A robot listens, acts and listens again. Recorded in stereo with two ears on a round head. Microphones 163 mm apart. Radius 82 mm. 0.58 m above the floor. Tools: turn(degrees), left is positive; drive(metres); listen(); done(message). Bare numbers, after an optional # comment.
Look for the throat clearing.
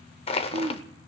# The throat clearing: about 70° right or 110° right.
turn(-70)
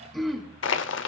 done("Facing the throat clearing.")